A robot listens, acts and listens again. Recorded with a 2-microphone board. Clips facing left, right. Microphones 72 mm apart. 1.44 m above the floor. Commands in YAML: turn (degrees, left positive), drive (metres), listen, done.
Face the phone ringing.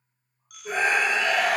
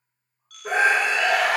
turn: 15
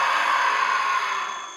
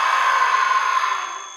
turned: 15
listen: true
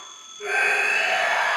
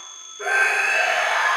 done: "Facing the phone ringing, under 1 m away."